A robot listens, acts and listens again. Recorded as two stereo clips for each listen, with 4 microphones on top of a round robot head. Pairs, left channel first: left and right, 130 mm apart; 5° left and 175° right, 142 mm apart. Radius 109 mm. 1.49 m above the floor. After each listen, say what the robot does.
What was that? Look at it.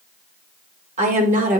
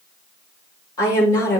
Turn 70° right.
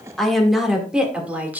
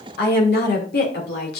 Turn 15° right.
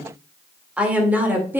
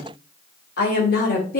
Turn 15° right.
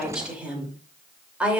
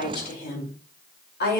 Turn 10° right.
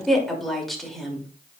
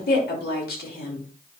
Facing the woman speaking.